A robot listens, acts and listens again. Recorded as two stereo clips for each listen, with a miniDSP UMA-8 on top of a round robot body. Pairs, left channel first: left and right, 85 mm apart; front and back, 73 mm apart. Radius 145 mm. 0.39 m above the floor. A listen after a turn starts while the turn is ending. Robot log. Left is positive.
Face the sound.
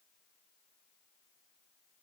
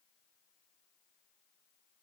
cmd idle
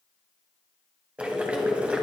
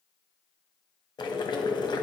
note: The boiling: 15° right.
cmd yaw -15
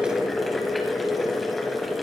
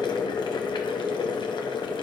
end: Facing the boiling, 1 to 2 m away.